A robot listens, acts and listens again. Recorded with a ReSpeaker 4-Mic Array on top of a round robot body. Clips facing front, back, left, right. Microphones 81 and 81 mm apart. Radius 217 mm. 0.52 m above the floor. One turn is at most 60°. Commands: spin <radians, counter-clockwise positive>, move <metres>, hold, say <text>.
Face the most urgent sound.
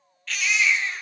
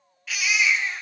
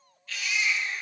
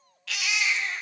spin -1.05
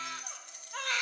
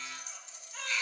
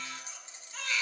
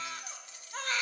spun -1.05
spin -0.70
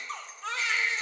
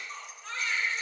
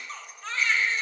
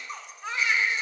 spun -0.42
spin -0.26
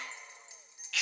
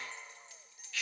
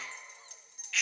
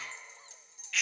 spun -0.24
say Facing the baby crying.